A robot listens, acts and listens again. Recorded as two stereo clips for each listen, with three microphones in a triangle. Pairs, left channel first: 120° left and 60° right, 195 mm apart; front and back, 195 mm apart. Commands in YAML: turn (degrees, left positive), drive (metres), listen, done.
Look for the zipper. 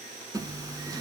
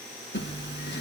turn: 10
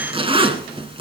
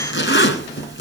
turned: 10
done: "Facing the zipper, 1 to 2 m away."